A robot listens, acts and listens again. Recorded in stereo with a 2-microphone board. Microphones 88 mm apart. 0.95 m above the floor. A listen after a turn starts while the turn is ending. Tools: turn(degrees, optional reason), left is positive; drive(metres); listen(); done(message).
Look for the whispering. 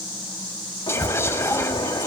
turn(degrees=30, reason="The whispering: about 30° left or 150° left.")
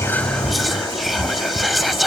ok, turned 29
done("Found it: whispering, straight ahead.")